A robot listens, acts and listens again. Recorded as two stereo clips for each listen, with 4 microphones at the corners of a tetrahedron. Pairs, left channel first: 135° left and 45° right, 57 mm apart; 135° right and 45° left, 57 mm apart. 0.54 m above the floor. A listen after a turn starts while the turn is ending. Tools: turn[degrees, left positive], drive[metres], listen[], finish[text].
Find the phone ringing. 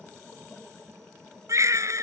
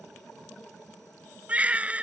Action: listen[]
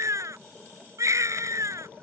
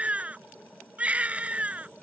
Action: listen[]
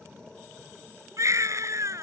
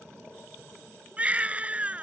Action: finish[I can't make out a phone ringing, only a baby crying.]